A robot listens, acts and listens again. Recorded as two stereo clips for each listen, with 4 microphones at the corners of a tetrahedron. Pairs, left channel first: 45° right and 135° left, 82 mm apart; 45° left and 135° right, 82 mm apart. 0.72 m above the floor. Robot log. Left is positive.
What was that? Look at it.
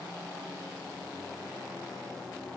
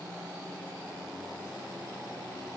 cmd idle
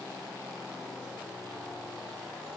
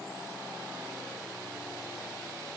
cmd idle
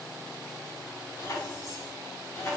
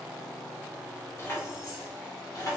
note: The keys jangling: 10° left.
cmd yaw +10
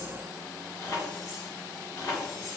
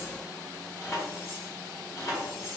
end: Facing the keys jangling, 1 to 2 m away.